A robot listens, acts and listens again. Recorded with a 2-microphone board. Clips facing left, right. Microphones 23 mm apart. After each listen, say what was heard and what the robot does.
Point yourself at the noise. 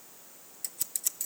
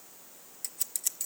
Turn 30° right.
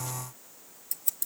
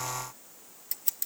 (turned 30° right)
So it is at 145° right. Turn 145° right.
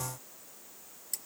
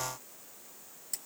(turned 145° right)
Keep listening.
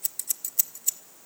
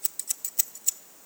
Facing the scissors, under 1 m away.